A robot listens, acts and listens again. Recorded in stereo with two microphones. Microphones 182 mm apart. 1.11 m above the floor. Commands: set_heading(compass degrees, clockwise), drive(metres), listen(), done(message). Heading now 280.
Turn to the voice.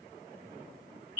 listen()
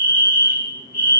listen()
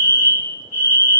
done("I can't make out anyone speaking to turn to.")